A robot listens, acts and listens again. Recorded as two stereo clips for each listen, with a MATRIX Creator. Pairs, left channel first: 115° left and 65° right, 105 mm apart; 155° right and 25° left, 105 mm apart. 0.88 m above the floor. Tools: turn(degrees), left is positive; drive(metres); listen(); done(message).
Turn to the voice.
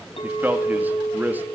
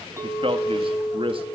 done("Found it: a man speaking, straight ahead.")